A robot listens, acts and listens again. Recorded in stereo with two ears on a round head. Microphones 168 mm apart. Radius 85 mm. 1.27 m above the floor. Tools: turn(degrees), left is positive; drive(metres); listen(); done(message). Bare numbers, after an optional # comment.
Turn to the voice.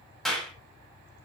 listen()
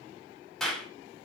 listen()
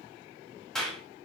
done("I can't make out anyone speaking, only a clap.")